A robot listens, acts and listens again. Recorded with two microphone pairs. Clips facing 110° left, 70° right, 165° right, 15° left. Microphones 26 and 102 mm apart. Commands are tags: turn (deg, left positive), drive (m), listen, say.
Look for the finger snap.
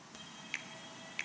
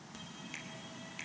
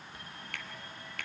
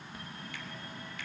<turn deg="170"/>
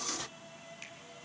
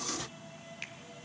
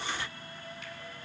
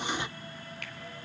<say>Found it: a finger snap, straight ahead.</say>